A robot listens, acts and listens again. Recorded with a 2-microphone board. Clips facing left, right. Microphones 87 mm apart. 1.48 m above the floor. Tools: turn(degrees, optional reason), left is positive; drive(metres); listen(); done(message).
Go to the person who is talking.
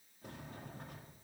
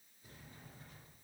listen()
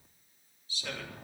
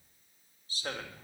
turn(degrees=-40, reason="The man speaking: about 40° right or 140° right.")
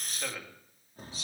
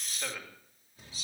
drive(metres=1.0)
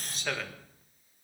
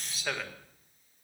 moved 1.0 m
drive(metres=1.0)
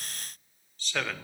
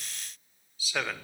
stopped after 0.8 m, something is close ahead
done("Arrived at the man speaking, straight ahead.")